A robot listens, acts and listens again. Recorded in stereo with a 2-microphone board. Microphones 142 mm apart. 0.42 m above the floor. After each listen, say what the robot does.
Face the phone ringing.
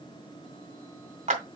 Keep listening.
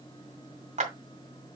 Keep listening.
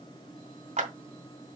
I can't make out a phone ringing to turn to.